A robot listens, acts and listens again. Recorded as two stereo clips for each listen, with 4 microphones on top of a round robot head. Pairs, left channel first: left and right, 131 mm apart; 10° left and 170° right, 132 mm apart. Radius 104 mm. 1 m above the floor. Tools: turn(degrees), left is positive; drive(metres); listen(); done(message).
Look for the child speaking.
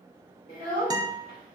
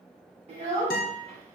turn(degrees=150)
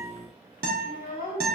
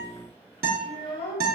turn(degrees=55)
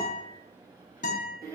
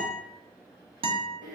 turn(degrees=-30)
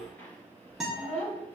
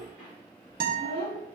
turn(degrees=10)
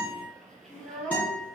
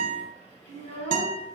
done("Facing the child speaking, 2 to 4 m away.")